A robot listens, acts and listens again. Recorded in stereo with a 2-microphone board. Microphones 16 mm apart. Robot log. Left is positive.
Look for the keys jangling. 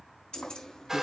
cmd yaw +90
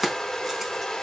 end: Found it: keys jangling, straight ahead, over 4 m away.